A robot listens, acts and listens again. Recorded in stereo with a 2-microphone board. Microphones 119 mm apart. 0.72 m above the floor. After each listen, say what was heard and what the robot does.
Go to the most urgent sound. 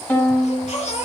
Turn 90° left.
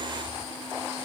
Keep listening.
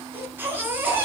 The baby crying is now 15° right. Turn 15° right.
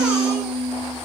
Keep listening.
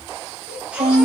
The baby crying is now 10° right. Turn 10° right.
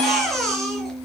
Drive 1.0 m forward.
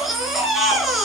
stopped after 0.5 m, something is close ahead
Blocked. The baby crying is further on, straight ahead.